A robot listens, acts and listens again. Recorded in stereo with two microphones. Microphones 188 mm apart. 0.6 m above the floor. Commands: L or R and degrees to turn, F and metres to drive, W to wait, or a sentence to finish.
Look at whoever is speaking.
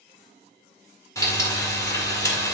W
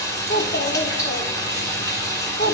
L65
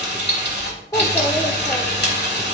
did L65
L20
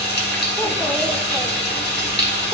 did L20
W
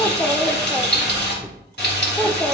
Found it: a child speaking, straight ahead, under 1 m away.